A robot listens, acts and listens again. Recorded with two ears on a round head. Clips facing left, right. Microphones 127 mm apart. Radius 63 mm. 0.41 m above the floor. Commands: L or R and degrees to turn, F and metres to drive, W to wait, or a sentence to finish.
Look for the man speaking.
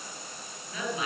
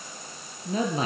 R30
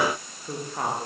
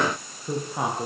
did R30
Facing the man speaking.